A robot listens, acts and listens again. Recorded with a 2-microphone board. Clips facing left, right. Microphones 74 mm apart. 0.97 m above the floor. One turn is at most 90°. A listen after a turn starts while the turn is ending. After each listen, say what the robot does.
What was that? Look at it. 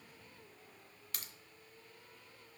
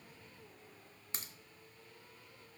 Turn 25° right.
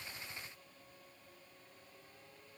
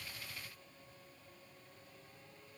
Keep listening.
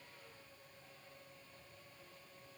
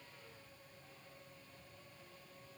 I heard a crack, but can't make it out now. It was about straight ahead or 130° right.